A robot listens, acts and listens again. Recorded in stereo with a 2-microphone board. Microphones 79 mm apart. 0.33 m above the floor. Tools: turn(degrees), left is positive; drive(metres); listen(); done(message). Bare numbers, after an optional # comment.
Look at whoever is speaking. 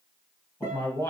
# The man speaking: about 30° left or 150° left.
turn(30)
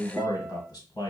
# So it is at 110° left.
turn(110)
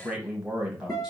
# The man speaking is now 10° right.
turn(-10)
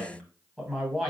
done("Facing the man speaking.")